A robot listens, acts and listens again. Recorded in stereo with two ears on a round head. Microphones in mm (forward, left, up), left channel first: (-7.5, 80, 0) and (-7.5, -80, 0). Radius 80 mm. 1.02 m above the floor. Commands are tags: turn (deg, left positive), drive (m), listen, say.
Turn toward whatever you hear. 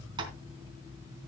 <turn deg="-30"/>
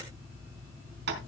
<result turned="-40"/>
<turn deg="-110"/>
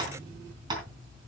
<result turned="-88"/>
<turn deg="-25"/>
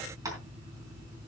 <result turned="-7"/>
<turn deg="-20"/>
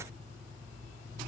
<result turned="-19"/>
<listen/>
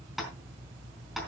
<say>Facing the tapping, 2 to 4 m away.</say>